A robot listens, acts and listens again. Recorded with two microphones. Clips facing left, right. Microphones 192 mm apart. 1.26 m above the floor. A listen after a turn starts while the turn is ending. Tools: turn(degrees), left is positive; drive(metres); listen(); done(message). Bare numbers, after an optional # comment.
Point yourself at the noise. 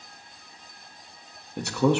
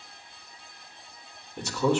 # The man speaking: about 60° left or 120° left.
turn(60)
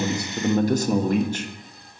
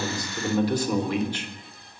# So it is at 45° left.
turn(45)
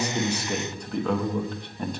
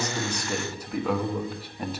done("Facing the man speaking.")